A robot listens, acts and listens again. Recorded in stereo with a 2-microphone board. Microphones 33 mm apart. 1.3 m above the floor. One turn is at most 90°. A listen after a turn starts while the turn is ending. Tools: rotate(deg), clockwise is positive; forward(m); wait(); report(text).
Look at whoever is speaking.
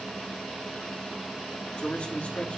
rotate(-40)
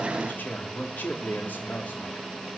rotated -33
rotate(-90)
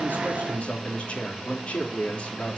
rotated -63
rotate(-45)
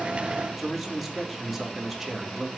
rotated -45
report("Found it: a man speaking, straight ahead, 2 to 4 m away.")